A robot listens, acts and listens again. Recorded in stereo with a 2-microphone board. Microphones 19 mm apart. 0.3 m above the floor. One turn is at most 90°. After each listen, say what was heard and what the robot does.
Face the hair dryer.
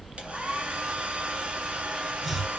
Turn 90° right.
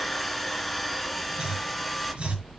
Found it: a hair dryer, straight ahead, 2 to 4 m away.